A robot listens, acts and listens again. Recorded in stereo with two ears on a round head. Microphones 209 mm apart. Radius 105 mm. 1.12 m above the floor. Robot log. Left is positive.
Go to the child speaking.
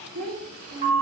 cmd yaw -90
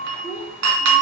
note: So it is at 10° right.
cmd yaw -10
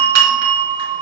cmd idle
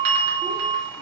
cmd idle
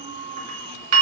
end: Facing where the child speaking came from. I can't hear it now. I did not reach it.